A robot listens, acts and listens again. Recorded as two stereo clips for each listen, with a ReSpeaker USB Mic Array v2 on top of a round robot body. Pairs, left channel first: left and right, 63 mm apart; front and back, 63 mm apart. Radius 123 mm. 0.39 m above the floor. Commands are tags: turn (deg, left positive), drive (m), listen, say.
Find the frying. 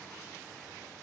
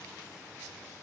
<listen/>
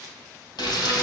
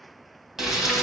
<turn deg="95"/>
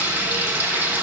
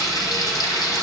<turn deg="-25"/>
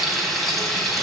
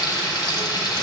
<say>Found it: frying, straight ahead, 1 to 2 m away.</say>